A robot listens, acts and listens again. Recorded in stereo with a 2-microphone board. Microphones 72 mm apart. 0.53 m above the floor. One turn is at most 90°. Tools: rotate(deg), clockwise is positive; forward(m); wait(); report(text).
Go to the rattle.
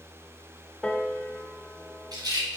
rotate(75)
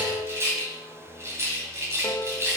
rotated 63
rotate(40)
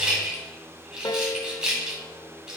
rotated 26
rotate(15)
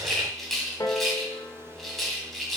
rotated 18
forward(1.0)
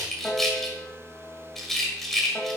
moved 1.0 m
forward(1.0)
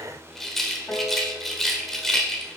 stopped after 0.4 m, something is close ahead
report("Arrived at the rattle, straight ahead.")